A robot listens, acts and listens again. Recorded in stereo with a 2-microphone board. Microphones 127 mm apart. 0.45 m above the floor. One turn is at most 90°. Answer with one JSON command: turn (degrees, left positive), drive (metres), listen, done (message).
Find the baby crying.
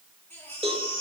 {"turn": 30}
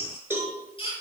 {"turn": 90}
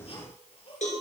{"turn": 45}
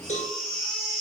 {"done": "Found it: a baby crying, straight ahead."}